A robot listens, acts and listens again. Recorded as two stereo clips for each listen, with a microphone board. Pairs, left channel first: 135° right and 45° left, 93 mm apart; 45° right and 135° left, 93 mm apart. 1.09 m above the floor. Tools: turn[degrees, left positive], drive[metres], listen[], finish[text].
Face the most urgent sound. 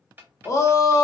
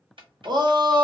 Thought: The shout: 170° left.
Action: turn[170]
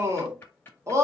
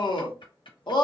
Thought: The shout is now 10° right.
Action: turn[-10]
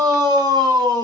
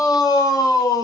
Action: finish[Facing the shout, under 1 m away.]